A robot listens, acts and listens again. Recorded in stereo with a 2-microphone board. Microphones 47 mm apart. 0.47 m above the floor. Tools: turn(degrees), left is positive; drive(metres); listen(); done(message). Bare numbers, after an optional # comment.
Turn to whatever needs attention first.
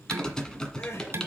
# The crying: about 65° left or 115° left.
turn(65)
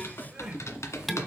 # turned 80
# So it is at 20° right.
turn(-20)
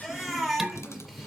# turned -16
done("Found it: crying, straight ahead, 2 to 4 m away.")